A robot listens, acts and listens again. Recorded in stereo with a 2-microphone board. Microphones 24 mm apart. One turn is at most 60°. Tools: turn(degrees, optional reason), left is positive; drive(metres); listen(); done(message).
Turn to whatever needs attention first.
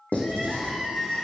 turn(degrees=20, reason="The crying: about 20° left or 160° left.")
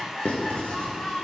turn(degrees=60, reason="So it is at 140° left.")
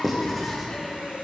turn(degrees=60, reason="Nothing new. It was at 80° left.")
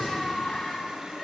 turn(degrees=20, reason="The crying is now 20° left.")
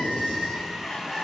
done("Facing the crying.")